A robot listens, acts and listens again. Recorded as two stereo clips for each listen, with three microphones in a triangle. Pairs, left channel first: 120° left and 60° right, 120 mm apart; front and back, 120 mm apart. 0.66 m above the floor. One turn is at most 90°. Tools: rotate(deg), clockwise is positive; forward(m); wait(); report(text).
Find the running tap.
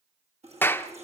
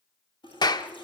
rotate(45)
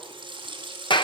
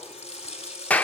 rotate(15)
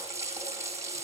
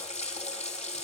report("Facing the running tap, over 4 m away.")